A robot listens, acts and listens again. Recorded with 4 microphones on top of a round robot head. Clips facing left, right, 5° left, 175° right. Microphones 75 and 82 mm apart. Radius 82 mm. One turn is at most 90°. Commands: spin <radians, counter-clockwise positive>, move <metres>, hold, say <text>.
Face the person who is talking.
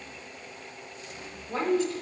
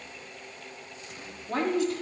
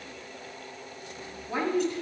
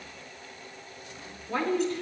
spin -1.31
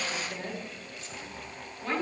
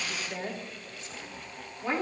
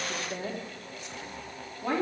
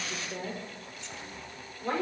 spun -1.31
spin -0.26
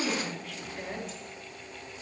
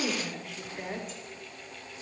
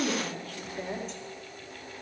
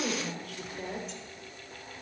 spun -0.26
say Found it: a woman speaking, straight ahead.